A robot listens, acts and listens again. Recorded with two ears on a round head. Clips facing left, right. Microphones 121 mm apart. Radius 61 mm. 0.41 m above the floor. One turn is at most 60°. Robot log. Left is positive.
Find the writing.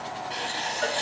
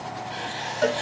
note: The writing: about 55° left or 125° left.
cmd yaw +55
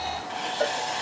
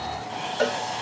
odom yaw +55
end: Facing the writing, 1 to 2 m away.